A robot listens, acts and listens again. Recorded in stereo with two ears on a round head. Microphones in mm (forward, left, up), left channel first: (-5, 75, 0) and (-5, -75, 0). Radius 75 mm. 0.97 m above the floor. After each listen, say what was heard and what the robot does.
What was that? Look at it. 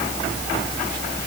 Keep listening.
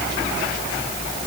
Keep listening.
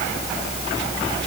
I can't make out anything to turn to.